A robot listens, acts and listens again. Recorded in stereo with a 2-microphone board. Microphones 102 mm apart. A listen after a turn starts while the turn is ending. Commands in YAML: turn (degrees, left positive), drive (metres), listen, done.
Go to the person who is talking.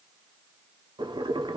listen: true
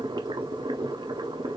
listen: true
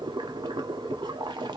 done: "I can't make out anyone speaking, only boiling."